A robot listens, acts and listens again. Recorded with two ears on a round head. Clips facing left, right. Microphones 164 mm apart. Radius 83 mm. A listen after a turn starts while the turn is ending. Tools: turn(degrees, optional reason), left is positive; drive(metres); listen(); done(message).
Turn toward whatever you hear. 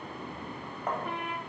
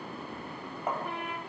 turn(degrees=-30)
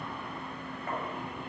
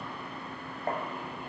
turn(degrees=-145, reason="So it is at 145° right.")
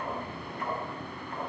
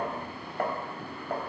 turn(degrees=-45, reason="The tapping is now 45° right.")
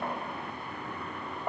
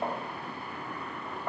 turn(degrees=10, reason="The tapping is now 10° left.")
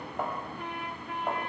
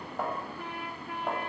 done("Found it: tapping, straight ahead.")